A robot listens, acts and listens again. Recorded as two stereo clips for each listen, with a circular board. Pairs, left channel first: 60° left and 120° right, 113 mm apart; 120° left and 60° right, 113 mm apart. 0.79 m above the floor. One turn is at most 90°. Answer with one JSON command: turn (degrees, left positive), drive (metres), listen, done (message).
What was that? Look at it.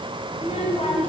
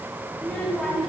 {"turn": 35}
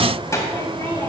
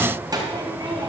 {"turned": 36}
{"turn": -10}
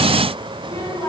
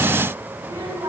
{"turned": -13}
{"done": "Found it: a child speaking, straight ahead."}